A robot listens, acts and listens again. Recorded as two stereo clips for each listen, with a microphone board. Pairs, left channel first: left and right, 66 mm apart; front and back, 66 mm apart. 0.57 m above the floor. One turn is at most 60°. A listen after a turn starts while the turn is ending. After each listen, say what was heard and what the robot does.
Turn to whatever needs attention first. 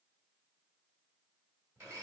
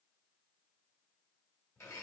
Keep listening.
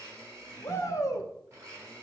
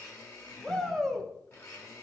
The shout: 80° left. Turn 60° left.
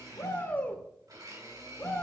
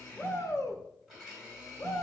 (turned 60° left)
The shout is now 30° left. Turn 30° left.
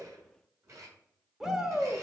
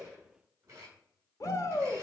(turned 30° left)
The shout is now 10° right. Turn 10° right.
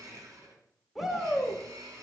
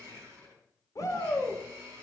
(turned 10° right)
Found it: a shout, straight ahead, 1 to 2 m away.